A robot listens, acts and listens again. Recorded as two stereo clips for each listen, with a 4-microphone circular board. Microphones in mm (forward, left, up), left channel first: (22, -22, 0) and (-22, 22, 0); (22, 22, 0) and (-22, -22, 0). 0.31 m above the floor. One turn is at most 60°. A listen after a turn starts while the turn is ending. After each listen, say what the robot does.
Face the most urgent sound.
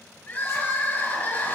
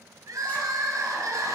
Turn 60° right.
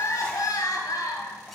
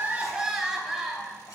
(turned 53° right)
Turn 50° right.
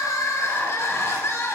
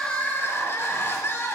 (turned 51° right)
Found it: crying, straight ahead, 1 to 2 m away.